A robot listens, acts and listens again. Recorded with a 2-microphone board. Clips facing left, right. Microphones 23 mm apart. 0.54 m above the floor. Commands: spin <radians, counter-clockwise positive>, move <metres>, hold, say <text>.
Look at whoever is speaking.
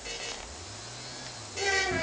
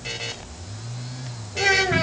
spin -1.22
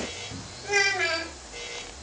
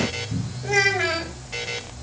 spin -0.17
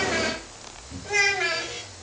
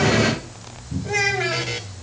say Found it: a child speaking, straight ahead, 2 to 4 m away.